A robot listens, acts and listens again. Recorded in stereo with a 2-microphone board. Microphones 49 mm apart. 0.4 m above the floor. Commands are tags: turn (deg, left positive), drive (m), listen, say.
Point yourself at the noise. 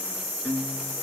<turn deg="40"/>
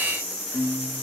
<turn deg="100"/>
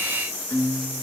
<turn deg="40"/>
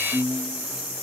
<turn deg="10"/>
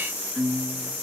<say>Facing the guitar.</say>